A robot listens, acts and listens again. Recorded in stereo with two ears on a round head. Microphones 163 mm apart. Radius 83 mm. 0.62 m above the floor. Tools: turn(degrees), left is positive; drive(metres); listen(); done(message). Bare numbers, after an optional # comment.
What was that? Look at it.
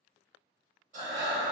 # The breathing: about 40° right or 140° right.
turn(-40)
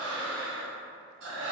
# So it is at 100° right.
turn(-100)
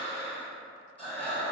done("Facing the breathing, under 1 m away.")